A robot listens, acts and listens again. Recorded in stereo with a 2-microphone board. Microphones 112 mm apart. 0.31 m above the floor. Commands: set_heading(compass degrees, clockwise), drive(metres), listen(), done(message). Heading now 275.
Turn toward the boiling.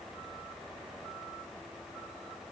listen()
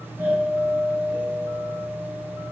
listen()
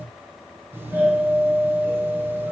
done("I can't make out boiling, only a doorbell.")